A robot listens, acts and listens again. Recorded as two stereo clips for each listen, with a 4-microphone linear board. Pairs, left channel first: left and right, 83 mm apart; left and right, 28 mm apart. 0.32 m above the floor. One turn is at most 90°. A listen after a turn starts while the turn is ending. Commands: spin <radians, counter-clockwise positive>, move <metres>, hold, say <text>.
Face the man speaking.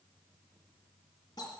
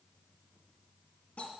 hold
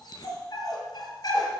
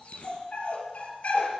hold
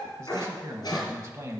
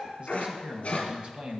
spin -0.61
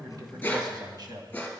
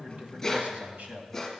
spin -1.57
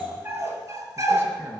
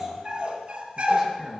spin -0.17
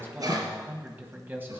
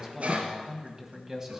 spin -0.44
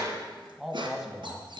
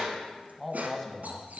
say Facing the man speaking, 1 to 2 m away.